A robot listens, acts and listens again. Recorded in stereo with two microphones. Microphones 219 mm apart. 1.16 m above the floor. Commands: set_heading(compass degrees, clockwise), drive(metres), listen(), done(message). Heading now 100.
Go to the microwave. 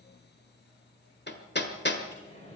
set_heading(70)
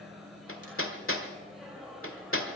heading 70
drive(1.0)
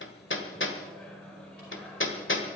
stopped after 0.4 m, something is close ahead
done("Something is in my way. I am facing the microwave but have not reached it.")